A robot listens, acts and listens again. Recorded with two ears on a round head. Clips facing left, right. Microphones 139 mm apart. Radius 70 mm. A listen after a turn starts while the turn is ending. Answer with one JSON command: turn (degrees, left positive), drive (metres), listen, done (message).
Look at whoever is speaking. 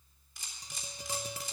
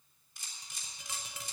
{"listen": true}
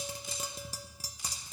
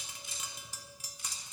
{"listen": true}
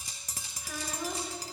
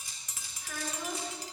{"turn": 30}
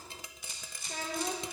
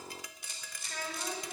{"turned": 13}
{"turn": 160}
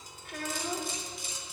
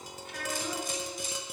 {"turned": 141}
{"turn": 20}
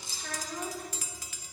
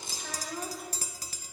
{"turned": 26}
{"done": "Facing the child speaking, 2 to 4 m away."}